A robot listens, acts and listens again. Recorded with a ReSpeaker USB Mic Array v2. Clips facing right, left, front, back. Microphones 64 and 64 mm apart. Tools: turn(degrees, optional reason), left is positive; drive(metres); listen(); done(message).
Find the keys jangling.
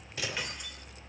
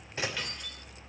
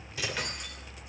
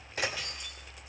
turn(degrees=-15, reason="The keys jangling: 15° right.")
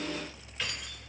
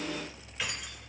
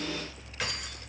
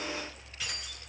turn(degrees=10, reason="The keys jangling is now 10° left.")
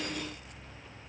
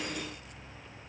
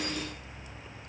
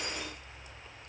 listen()
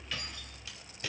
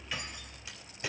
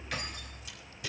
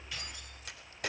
turn(degrees=20, reason="The keys jangling is now 20° left.")
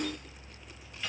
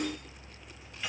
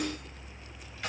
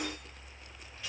turn(degrees=10, reason="The keys jangling is now 10° left.")
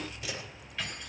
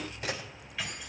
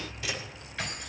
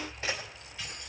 done("Found it: keys jangling, straight ahead.")